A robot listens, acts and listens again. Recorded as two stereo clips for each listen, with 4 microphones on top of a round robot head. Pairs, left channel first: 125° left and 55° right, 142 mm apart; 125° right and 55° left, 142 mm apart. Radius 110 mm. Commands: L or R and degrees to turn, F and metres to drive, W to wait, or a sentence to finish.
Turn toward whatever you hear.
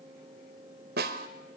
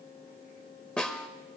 R45
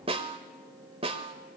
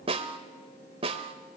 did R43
Facing the snare drum.